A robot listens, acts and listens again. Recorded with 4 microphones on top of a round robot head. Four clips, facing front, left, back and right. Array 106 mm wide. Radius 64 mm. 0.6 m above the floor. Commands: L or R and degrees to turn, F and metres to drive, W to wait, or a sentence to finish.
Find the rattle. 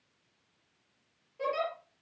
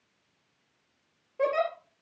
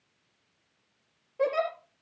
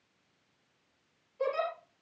W
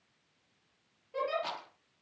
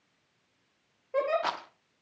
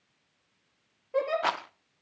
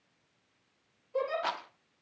L170
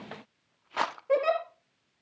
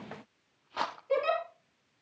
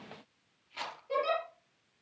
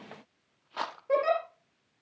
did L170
Found it: a rattle, straight ahead.